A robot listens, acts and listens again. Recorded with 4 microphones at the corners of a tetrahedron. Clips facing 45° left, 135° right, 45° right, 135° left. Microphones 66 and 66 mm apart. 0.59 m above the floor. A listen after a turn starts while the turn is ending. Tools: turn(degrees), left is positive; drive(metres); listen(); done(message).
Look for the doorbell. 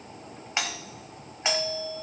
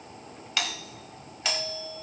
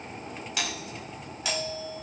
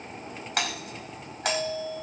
turn(degrees=110)
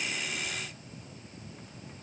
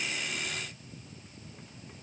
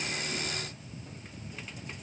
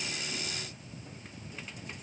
listen()
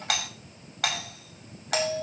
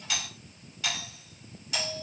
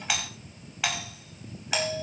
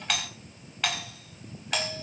turn(degrees=35)
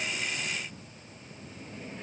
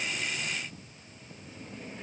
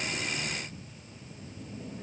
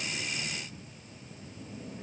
listen()
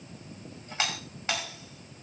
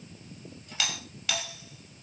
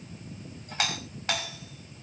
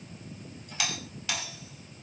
turn(degrees=-10)
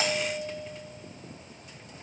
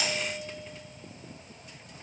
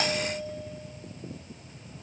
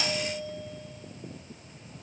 done("Facing the doorbell, over 4 m away.")